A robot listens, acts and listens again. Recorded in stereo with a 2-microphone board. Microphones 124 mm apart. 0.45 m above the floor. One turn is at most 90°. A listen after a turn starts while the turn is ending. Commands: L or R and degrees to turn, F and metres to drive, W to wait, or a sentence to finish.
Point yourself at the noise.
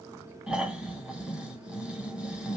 R30
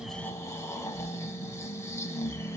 L20
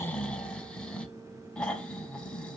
L10
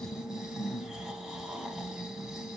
Facing the snoring.